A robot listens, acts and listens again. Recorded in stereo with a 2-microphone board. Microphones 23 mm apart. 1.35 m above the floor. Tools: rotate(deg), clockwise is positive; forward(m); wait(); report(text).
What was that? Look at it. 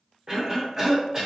rotate(20)
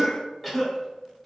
report("Facing the cough.")